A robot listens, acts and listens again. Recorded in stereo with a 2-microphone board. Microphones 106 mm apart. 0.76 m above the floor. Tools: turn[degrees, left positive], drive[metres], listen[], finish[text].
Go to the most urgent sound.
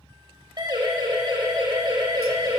Thought: The siren: about 45° right or 135° right.
Action: turn[-45]
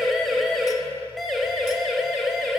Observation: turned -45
Action: drive[1.0]
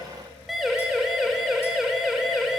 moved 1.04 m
Action: drive[1.0]
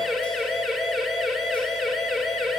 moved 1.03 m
Action: drive[1.0]
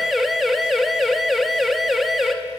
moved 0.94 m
Action: drive[1.0]
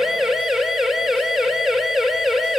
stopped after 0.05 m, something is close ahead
Action: finish[Arrived at the siren, straight ahead.]